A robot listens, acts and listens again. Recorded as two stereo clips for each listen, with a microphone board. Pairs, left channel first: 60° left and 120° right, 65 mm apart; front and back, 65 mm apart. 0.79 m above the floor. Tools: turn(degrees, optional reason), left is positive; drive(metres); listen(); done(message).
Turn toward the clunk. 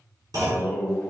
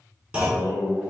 turn(degrees=-110, reason="The clunk: 110° right.")
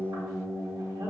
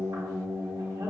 done("I heard a clunk from this way, but can't make it out now.")